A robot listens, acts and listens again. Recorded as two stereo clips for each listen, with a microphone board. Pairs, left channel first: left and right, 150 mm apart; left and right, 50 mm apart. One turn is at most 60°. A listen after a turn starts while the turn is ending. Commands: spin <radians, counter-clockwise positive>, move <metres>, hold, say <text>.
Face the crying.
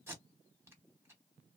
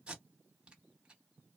hold
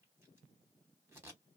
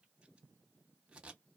hold
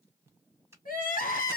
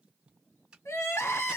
spin 1.05
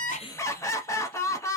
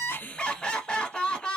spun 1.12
spin 0.35
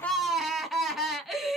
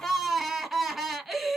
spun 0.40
say Facing the crying.